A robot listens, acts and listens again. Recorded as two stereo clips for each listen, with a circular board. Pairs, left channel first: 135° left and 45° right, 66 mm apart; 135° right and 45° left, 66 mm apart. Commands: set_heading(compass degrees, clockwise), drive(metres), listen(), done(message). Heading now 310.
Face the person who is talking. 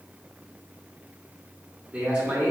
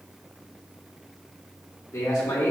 set_heading(50)
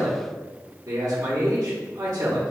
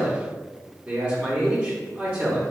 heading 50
set_heading(65)
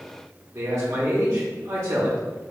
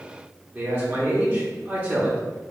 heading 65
done("Found it: a man speaking, straight ahead, under 1 m away.")